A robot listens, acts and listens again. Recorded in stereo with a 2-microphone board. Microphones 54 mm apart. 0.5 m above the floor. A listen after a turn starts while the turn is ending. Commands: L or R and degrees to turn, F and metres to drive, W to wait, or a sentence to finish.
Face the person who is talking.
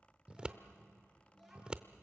R30
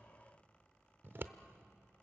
W
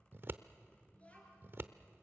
L25
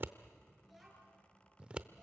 Found it: a child speaking, straight ahead.